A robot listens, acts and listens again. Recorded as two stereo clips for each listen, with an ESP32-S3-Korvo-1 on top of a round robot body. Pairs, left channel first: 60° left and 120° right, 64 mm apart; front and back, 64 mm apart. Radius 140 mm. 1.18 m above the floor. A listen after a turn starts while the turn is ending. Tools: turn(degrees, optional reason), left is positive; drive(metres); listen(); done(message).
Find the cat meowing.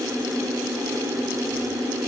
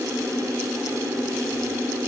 listen()
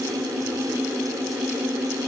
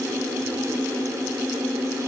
listen()
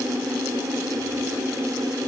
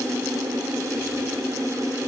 done("I can't make out a cat meowing.")